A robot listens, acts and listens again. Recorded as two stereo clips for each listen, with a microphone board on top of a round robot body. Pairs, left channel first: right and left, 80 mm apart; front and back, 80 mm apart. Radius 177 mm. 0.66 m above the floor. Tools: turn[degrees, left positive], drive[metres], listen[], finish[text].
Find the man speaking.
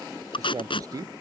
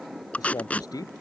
Thought: The man speaking: 45° left.
Action: turn[45]
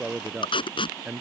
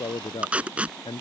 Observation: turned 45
Thought: The man speaking is now 15° left.
Action: turn[15]
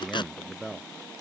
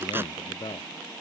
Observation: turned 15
Action: finish[Facing the man speaking.]